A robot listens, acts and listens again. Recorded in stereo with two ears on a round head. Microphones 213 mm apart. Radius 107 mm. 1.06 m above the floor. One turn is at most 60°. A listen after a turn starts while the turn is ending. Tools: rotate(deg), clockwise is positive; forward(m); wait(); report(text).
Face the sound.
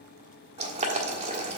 rotate(25)
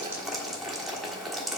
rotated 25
report("Found it: boiling, straight ahead.")